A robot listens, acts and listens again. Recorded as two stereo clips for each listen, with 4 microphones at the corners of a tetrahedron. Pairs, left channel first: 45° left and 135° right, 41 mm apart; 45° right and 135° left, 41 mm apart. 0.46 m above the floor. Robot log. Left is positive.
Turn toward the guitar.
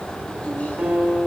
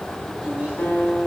note: The guitar: 90° right.
cmd yaw -90
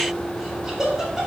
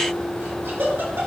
cmd idle
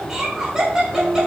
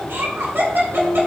note: The guitar is now 20° right.
cmd yaw -20
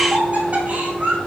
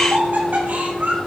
cmd idle
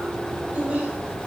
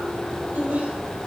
cmd idle
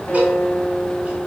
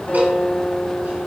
end: Facing the guitar, 2 to 4 m away.